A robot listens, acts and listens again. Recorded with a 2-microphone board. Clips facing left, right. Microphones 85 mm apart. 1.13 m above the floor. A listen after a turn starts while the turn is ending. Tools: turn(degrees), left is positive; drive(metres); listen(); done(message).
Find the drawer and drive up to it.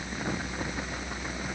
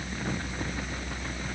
listen()
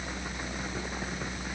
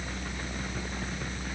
listen()
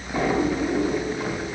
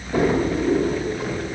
turn(degrees=-65)
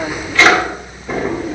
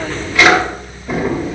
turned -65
drive(metres=1.0)
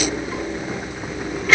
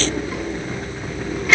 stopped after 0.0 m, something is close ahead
done("Something is in my way. I am facing the drawer but have not reached it.")